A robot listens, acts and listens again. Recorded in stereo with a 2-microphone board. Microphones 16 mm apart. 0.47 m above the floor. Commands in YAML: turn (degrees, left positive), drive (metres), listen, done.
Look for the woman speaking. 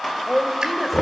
turn: -30
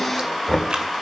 listen: true
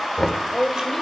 turn: 25
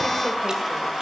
listen: true
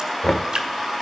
listen: true
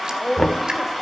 done: "Found it: a woman speaking, straight ahead, 1 to 2 m away."